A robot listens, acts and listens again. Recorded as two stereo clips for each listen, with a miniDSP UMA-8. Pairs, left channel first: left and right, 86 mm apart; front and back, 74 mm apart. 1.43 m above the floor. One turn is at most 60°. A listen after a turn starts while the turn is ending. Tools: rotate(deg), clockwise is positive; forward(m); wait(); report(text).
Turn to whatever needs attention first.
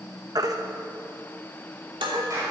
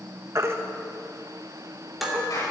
rotate(60)
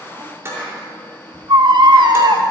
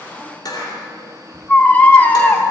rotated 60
rotate(60)
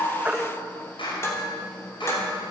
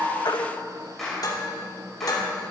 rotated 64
wait()
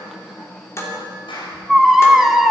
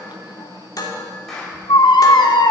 report("Facing the baby crying.")